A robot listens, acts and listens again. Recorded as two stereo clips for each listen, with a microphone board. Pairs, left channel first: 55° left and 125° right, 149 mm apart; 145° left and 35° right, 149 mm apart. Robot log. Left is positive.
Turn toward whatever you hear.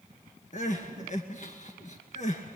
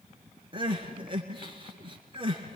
note: The crying: 20° left.
cmd yaw +20
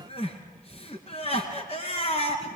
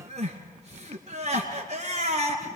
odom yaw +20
end: Facing the crying.